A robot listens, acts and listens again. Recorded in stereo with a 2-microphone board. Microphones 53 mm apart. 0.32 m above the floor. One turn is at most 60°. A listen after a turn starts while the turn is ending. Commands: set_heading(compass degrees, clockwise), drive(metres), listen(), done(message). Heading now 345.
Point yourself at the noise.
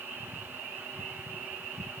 listen()
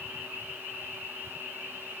listen()
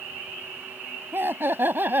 set_heading(25)
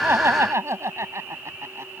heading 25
set_heading(85)
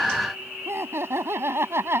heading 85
set_heading(140)
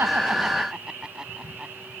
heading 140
set_heading(155)
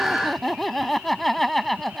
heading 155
done("Found it: laughter, straight ahead.")